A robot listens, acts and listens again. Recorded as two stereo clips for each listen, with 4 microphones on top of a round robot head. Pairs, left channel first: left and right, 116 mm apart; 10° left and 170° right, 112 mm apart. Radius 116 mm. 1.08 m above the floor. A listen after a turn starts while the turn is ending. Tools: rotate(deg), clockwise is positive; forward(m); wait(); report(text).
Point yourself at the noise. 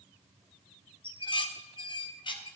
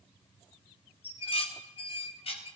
rotate(-45)
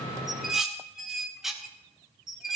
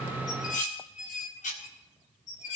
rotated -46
report("Facing the dishes clattering, 1 to 2 m away.")